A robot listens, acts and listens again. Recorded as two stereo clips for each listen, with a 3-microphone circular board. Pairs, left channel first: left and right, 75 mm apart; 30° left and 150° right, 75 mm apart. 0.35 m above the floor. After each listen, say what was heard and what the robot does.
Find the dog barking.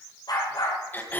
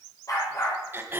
The dog barking: 70° left. Turn 70° left.
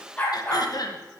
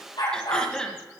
The dog barking is now 15° left. Turn 15° left.
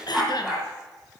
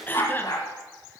The dog barking is now 10° right. Turn 10° right.
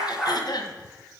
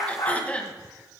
Facing the dog barking.